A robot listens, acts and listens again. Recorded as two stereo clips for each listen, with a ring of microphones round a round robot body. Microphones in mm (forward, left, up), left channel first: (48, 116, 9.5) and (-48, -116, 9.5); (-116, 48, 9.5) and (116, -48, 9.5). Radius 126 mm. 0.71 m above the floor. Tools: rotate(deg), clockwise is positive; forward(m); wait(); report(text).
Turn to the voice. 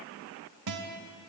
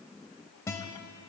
wait()
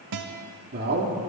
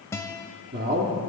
rotate(70)
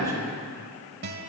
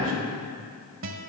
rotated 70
rotate(10)
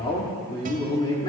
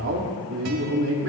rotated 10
report("Found it: a man speaking, straight ahead, 1 to 2 m away.")